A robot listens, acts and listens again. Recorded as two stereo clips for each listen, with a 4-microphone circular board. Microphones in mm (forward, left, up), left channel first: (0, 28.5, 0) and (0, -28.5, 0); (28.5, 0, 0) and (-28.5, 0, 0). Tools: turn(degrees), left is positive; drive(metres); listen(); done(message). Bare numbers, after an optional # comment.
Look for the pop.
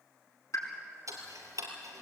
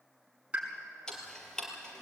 # The pop: 115° left.
turn(115)
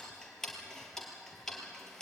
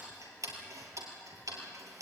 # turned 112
done("I heard a pop from this way, but can't make it out now.")